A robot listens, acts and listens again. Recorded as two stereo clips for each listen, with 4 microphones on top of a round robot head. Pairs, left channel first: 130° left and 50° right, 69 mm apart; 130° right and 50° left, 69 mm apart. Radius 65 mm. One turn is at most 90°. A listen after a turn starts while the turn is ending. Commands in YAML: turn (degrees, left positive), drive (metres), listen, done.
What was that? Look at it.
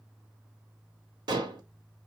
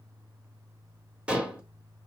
turn: -25
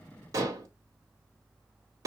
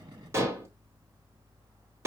done: "Found it: dishes clattering, straight ahead, 1 to 2 m away."